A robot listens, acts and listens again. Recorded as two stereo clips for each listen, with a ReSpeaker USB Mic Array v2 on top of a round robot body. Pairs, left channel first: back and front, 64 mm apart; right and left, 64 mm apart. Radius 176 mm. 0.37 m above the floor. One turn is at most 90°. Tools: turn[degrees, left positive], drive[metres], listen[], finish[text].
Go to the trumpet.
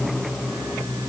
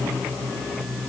Action: listen[]
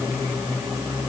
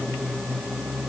Action: listen[]
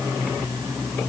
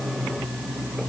Action: finish[I can't make out a trumpet to turn to.]